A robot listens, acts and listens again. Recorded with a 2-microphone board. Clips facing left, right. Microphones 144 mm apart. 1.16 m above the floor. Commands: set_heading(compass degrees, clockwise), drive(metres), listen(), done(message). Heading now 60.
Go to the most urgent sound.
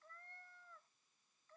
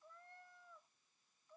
listen()
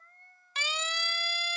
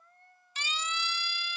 set_heading(355)
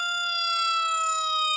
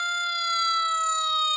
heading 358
drive(1.0)
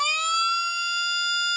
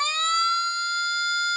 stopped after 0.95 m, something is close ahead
set_heading(348)
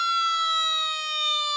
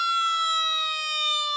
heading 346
done("Blocked. The siren is further on, straight ahead.")